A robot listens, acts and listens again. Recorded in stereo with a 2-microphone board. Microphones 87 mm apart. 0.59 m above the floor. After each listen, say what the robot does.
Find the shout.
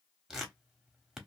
Keep listening.
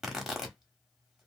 Keep listening.
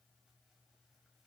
I can't make out a shout to turn to.